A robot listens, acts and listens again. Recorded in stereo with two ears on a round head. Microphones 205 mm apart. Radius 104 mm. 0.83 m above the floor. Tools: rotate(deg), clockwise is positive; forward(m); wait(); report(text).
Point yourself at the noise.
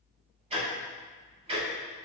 rotate(30)
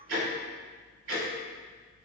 rotate(120)
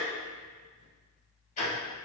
rotate(-35)
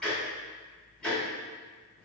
report("Found it: ticking, straight ahead.")